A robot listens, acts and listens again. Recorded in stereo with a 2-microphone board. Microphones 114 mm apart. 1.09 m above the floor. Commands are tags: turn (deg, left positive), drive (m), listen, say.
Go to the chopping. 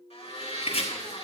<turn deg="70"/>
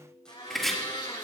<drive m="1.0"/>
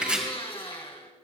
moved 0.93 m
<turn deg="-10"/>
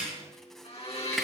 <listen/>
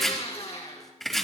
<drive m="1.0"/>
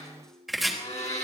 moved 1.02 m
<drive m="1.0"/>
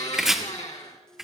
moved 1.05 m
<drive m="1.0"/>
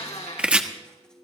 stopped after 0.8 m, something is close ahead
<turn deg="-10"/>
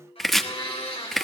<say>Arrived at the chopping, straight ahead.</say>